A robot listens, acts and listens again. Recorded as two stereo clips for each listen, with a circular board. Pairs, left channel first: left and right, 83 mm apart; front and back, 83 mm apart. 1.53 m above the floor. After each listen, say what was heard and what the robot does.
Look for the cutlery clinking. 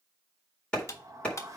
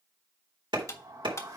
The cutlery clinking: 45° left. Turn 45° left.
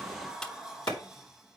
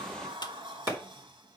Keep listening.
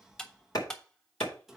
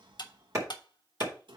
The cutlery clinking is now 10° left. Turn 10° left.
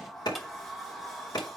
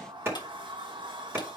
Keep listening.
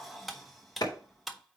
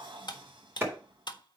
Found it: cutlery clinking, straight ahead.